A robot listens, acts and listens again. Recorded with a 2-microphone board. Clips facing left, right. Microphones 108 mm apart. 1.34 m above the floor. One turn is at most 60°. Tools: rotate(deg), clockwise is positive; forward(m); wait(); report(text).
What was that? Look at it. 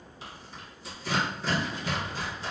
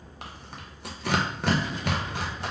rotate(60)
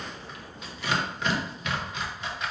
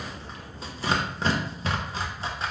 rotate(35)
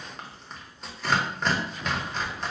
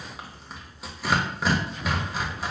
report("Found it: tearing paper, straight ahead, under 1 m away.")